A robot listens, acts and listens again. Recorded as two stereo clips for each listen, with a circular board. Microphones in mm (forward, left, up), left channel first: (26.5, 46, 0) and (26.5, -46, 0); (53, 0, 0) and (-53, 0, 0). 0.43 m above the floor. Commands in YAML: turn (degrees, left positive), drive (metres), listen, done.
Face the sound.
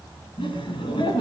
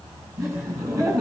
turn: 120
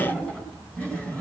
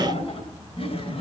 turn: 15
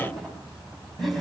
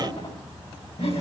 done: "Found it: laughter, straight ahead."